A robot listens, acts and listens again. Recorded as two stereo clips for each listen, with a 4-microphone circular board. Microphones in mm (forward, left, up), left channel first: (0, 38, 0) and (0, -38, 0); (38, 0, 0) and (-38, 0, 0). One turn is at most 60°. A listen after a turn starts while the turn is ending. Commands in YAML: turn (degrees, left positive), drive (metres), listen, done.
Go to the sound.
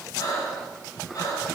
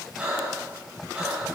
turn: 60
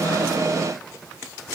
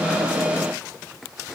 turn: 50
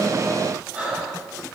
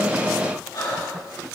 turn: -20
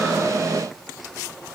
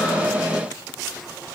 listen: true
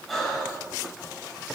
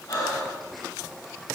drive: 1.0
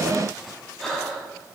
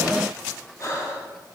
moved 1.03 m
turn: 10
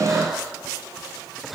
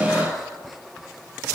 drive: 1.0
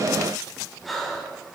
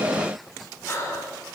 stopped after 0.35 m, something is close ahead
done: "I am next to the breathing."